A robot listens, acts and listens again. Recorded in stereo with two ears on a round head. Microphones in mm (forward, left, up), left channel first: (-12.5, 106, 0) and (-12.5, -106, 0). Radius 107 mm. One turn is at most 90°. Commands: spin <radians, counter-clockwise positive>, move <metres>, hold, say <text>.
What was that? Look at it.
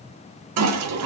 spin -1.22
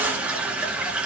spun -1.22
say Facing the toilet flushing.